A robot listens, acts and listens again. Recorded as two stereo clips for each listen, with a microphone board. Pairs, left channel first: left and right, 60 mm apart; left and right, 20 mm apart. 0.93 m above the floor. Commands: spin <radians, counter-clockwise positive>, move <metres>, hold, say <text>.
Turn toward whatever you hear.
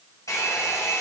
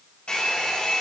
spin 1.22
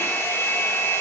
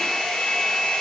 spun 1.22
spin 0.79
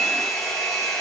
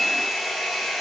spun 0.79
say Facing the hair dryer.